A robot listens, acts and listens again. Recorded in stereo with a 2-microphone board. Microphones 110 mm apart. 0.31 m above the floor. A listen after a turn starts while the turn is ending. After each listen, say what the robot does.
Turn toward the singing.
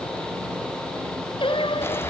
Turn 55° left.
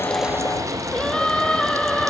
Turn 10° left.
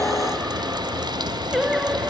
Found it: singing, straight ahead.